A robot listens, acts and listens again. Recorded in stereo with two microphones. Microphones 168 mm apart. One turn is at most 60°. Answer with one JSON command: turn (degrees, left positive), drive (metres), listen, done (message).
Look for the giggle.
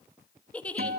{"turn": 30}
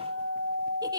{"listen": true}
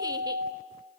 {"listen": true}
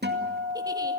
{"done": "I heard a giggle, but can't make it out now. It was about 20° right or 140° left."}